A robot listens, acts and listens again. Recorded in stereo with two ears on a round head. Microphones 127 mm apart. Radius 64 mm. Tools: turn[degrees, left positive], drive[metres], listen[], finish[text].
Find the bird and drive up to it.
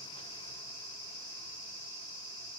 Action: listen[]
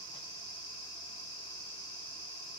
Action: listen[]
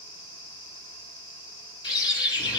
Thought: The bird: about 30° left or 150° left.
Action: turn[30]
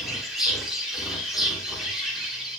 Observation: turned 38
Action: drive[1.0]
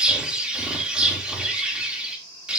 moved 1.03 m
Thought: The bird is now 10° right.
Action: turn[-10]
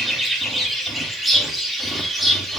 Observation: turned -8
Action: drive[1.0]
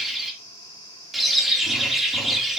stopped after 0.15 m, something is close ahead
Action: finish[I am next to the bird.]